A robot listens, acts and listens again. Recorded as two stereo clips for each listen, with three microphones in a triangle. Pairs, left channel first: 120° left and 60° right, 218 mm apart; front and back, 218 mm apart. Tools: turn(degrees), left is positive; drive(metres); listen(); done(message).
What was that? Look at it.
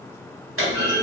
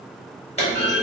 turn(degrees=-60)
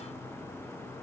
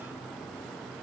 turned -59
done("I heard a clunk from this way, but can't make it out now.")